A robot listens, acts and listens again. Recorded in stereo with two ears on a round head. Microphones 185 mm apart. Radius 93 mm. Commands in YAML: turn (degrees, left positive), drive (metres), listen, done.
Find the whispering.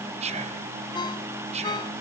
turn: -30
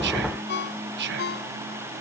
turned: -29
turn: -115
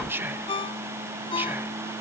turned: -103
turn: -10
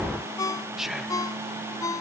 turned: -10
done: "Facing the whispering."